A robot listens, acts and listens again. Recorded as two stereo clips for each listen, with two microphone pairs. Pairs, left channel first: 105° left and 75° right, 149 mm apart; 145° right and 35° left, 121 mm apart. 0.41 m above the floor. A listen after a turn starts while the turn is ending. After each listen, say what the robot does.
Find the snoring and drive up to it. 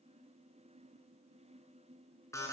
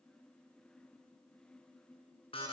Keep listening.
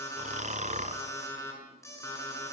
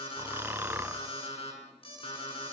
Turn 40° right.
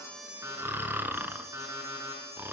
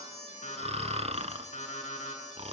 Drive 1.0 m forward.
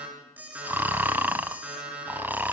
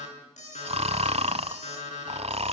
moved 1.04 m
Drive 1.0 m forward.
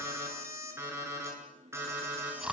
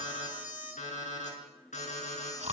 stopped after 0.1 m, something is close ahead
Turn 10° left.
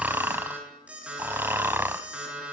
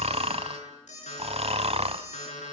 Arrived at the snoring, straight ahead.